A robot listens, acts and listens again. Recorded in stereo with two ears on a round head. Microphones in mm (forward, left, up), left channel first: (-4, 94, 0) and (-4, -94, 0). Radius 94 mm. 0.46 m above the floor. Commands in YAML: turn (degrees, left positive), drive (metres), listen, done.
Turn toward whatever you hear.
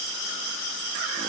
listen: true
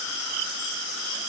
listen: true
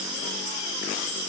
done: "I can't make out anything."